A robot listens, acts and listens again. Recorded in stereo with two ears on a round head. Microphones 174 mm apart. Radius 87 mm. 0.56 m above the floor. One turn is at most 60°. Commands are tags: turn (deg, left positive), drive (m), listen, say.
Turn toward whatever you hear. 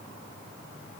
<listen/>
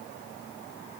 <listen/>
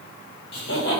<turn deg="60"/>
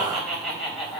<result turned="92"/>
<say>Found it: laughter, straight ahead.</say>